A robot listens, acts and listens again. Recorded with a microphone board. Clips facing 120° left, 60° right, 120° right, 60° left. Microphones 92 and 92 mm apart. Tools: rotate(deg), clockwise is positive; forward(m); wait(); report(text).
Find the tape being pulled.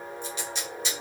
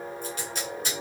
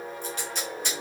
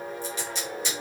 rotate(95)
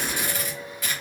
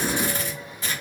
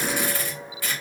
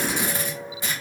report("Facing the tape being pulled, 1 to 2 m away.")